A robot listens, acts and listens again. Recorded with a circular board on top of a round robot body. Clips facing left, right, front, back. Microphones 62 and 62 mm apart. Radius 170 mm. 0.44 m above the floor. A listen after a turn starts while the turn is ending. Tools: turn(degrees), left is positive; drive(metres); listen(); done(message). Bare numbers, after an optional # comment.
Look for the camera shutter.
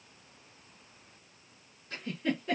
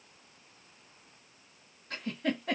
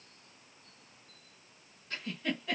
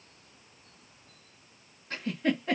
listen()
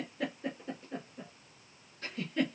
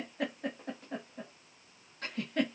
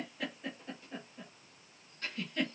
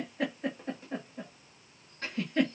listen()
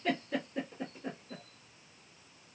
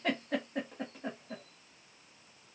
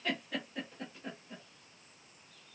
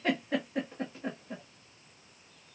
done("I can't make out a camera shutter, only a giggle.")